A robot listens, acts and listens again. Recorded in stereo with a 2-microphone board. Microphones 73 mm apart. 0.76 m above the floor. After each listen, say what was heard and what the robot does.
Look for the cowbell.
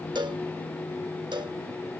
The cowbell: about 75° right or 105° right. Turn 75° right.
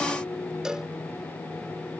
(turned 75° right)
So it is at 10° right. Turn 10° right.
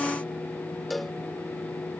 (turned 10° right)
Facing the cowbell.